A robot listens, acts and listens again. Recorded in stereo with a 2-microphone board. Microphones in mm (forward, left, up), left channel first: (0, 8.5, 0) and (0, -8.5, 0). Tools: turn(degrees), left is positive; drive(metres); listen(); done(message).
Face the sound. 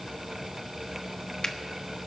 turn(degrees=45)
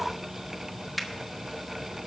done("Found it: a finger snap, straight ahead.")